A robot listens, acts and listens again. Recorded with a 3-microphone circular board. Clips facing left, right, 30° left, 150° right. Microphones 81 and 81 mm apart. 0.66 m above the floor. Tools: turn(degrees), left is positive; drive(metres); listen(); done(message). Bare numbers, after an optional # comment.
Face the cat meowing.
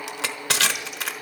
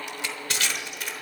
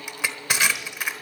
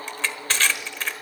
listen()
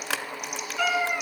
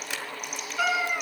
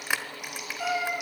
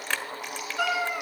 # The cat meowing: 165° right.
turn(-165)
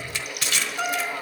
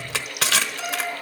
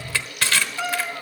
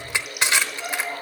# The cat meowing is now 60° left.
turn(60)
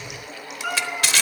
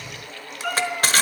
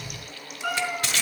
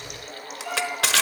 # The cat meowing is now 10° left.
turn(10)
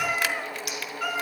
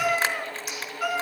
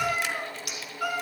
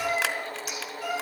done("Found it: a cat meowing, straight ahead.")